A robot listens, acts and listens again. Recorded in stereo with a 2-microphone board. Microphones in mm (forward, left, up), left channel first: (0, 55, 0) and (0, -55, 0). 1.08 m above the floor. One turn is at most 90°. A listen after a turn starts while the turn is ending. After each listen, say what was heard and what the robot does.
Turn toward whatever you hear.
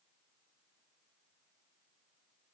Keep listening.
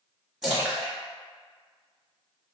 Turn 30° right.
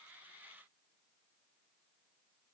Keep listening.
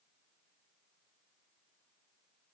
I heard a splash, but can't make it out now. It was about 25° left or 145° right.